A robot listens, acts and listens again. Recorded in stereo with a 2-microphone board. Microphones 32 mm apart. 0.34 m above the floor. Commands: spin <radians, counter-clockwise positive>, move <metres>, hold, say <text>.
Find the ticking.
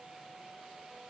hold
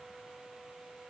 hold
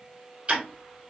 spin -0.52
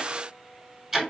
say Facing the ticking, 1 to 2 m away.